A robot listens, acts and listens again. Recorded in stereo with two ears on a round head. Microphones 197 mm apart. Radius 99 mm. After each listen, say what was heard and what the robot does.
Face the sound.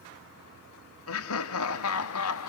Turn 90° left.
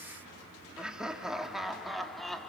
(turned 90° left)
Facing the laughter.